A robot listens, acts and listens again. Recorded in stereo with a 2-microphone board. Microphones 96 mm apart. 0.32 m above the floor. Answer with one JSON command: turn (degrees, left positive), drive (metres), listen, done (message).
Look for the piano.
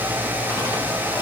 {"listen": true}
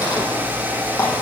{"listen": true}
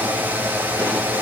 {"done": "I can't make out a piano."}